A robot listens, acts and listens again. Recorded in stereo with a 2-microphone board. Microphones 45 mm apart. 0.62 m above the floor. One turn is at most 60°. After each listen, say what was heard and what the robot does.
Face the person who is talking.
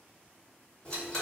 Keep listening.
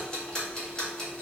Keep listening.
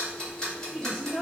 Turn 30° right.
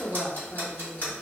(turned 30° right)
So it is at 20° left. Turn 20° left.
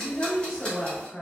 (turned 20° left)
Facing the woman speaking, 1 to 2 m away.